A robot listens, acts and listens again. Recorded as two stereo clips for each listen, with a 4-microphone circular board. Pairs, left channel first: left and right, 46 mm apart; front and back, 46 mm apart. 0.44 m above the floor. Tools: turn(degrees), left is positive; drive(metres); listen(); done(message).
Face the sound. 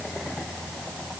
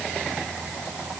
listen()
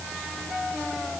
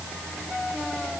listen()
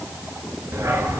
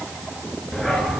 turn(degrees=-75)
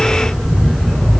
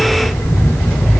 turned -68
done("Found it: a dog barking, straight ahead, 1 to 2 m away.")